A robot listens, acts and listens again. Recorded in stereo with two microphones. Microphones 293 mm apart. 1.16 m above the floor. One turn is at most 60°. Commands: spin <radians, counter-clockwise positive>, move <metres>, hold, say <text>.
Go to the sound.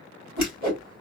spin -1.05
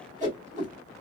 spin -0.44
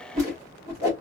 spin -0.17
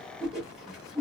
move 1.0
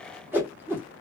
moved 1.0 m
spin -0.17
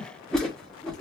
move 1.0
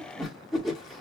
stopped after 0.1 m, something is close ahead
say Arrived at the whoosh, straight ahead.